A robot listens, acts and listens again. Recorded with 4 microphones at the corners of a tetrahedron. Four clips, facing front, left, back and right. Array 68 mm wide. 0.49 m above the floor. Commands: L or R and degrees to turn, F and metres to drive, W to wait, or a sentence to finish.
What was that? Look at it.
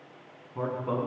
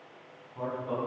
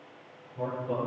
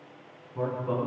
R15
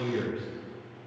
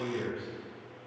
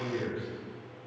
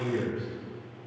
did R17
Found it: a man speaking, straight ahead.